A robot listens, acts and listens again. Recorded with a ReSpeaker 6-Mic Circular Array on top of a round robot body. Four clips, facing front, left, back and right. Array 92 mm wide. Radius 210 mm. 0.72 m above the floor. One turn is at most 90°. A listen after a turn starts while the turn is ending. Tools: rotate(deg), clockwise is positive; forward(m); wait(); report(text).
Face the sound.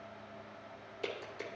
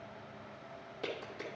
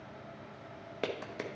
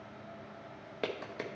rotate(90)
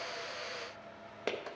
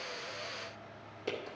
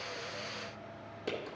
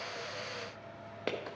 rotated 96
rotate(45)
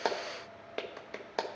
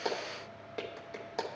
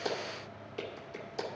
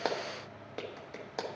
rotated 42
report("Facing the clap.")